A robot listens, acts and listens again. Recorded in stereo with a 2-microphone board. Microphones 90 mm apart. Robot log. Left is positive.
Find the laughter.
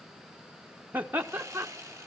note: The laughter: about 20° right or 160° right.
cmd yaw -20
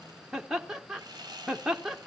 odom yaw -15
end: Facing the laughter.